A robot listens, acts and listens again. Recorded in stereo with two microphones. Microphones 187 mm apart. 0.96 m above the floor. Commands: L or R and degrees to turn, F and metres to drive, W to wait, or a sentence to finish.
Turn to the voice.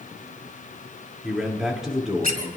L30
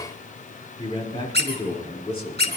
L150
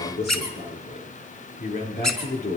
L55
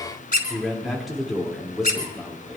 Found it: a man speaking, straight ahead, 2 to 4 m away.